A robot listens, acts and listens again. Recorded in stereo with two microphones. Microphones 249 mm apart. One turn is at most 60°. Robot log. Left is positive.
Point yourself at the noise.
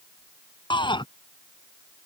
note: The shout: about 20° left or 160° left.
cmd yaw +20
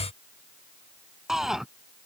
end: Found it: a shout, straight ahead.